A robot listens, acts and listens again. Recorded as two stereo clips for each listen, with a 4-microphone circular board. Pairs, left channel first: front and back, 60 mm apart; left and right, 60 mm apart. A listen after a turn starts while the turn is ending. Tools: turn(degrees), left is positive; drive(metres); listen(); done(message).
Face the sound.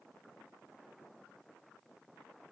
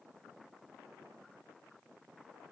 listen()
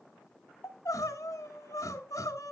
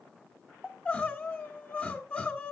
turn(degrees=25)
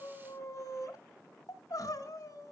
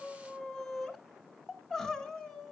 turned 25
turn(degrees=10)
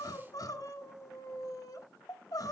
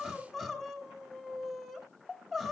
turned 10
done("Found it: crying, straight ahead, 1 to 2 m away.")